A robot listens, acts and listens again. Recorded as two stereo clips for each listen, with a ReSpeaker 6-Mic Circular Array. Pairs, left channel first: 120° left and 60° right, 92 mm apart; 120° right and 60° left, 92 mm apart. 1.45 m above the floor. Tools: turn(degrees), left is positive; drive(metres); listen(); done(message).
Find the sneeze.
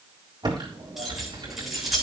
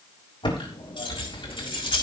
listen()
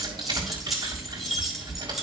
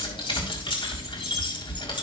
listen()
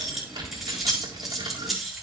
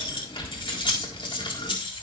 done("I can't make out a sneeze, only keys jangling and typing on a keyboard.")